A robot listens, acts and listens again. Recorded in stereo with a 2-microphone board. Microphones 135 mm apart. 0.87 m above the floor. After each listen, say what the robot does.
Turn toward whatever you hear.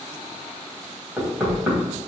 Turn 30° right.
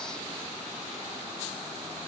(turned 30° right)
Keep listening.
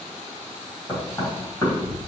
Turn 25° left.
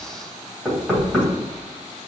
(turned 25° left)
Found it: knocking, straight ahead.